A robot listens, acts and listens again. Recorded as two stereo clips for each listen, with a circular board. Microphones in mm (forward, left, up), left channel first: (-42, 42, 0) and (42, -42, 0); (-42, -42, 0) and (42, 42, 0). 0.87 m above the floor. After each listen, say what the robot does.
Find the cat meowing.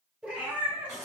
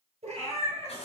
Turn 30° left.
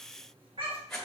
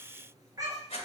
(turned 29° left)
Turn 10° right.
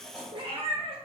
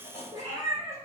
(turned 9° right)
Turn 15° right.
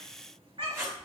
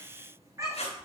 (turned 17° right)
Turn 15° right.
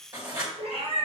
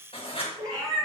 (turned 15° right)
Turn 15° right.
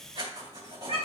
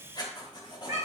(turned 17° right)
Turn 10° right.
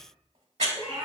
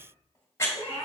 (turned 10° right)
Facing the cat meowing.